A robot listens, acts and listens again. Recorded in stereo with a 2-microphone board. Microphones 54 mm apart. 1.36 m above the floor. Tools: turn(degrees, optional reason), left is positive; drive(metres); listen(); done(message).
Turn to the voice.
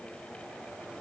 listen()
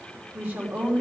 turn(degrees=-35, reason="The woman speaking: about 35° right or 145° right.")
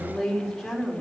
done("Facing the woman speaking.")